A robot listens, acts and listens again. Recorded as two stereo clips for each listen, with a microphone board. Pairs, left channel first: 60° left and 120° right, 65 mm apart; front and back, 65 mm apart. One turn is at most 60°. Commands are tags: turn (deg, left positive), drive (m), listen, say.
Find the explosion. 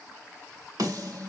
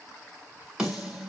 <listen/>
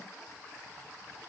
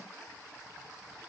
<listen/>
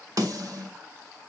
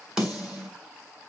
<say>I can't make out an explosion, only a snare drum.</say>